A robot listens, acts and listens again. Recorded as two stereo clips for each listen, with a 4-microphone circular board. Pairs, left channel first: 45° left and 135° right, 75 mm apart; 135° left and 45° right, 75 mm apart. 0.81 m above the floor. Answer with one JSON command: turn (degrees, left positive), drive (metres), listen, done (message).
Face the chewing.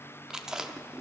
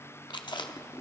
{"turn": 145}
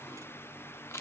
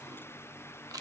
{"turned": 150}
{"done": "Found it: chewing, straight ahead."}